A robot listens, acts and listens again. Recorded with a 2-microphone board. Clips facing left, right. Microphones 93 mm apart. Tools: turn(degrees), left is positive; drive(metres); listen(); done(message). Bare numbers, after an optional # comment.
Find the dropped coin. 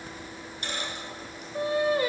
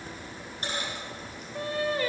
# The dropped coin: about 35° right or 145° right.
turn(-35)
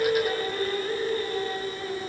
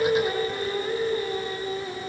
listen()
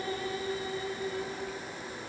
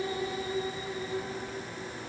done("I heard a dropped coin, but can't make it out now. It was about straight ahead or 110° right.")